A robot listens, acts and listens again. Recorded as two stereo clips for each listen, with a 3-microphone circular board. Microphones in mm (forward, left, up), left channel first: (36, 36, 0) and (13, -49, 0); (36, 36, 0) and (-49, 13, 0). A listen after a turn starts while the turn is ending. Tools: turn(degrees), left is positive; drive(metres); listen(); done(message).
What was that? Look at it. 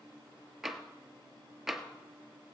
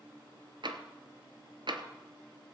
turn(degrees=170)
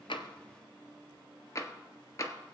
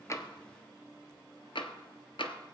turn(degrees=20)
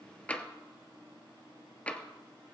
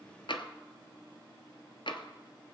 done("Facing the tapping.")